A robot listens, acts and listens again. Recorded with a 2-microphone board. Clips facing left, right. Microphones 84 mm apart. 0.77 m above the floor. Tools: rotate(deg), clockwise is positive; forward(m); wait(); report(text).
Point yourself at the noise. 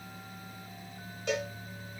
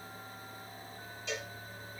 rotate(-65)
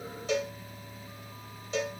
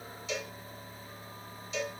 rotate(-45)
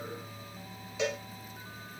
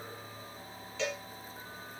rotate(-15)
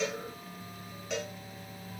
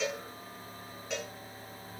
report("Facing the cowbell, 1 to 2 m away.")